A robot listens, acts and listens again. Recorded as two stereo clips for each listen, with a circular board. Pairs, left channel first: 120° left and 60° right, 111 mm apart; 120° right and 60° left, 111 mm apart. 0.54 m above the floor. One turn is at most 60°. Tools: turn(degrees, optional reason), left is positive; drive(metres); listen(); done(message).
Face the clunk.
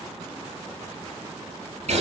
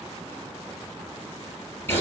listen()
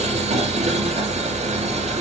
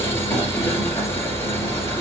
listen()
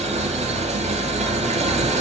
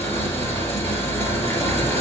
done("I can't make out a clunk to turn to.")